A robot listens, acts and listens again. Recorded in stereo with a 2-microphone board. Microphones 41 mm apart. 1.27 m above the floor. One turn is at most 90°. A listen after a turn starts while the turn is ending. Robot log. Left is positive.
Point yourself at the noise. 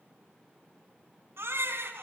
note: The baby crying: about 75° right or 105° right.
cmd yaw -75
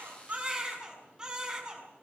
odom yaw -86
note: So it is at 20° right.
cmd yaw -20
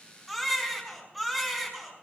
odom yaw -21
end: Facing the baby crying.